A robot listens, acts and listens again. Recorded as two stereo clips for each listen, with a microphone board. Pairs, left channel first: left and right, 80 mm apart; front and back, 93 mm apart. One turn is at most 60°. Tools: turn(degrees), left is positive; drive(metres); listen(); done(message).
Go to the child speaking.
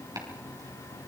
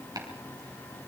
listen()
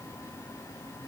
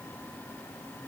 listen()
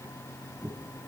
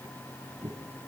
done("I can't make out a child speaking, only chopping.")